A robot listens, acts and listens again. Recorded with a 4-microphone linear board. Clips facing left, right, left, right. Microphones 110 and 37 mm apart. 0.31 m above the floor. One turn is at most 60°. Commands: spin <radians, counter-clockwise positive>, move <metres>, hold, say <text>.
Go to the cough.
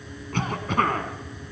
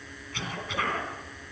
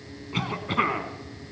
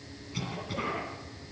spin 0.87
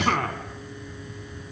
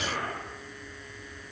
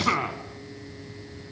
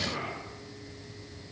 spin 1.05
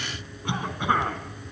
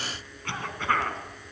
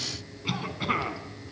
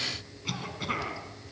spin 0.26
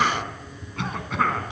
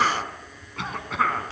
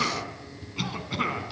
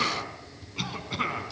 move 1.0
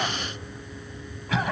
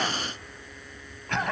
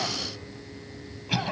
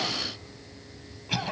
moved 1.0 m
move 1.0
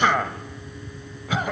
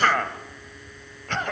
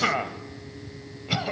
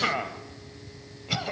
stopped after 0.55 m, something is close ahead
spin 0.17
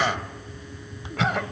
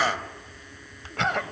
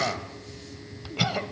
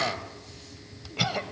say Arrived at the cough, straight ahead.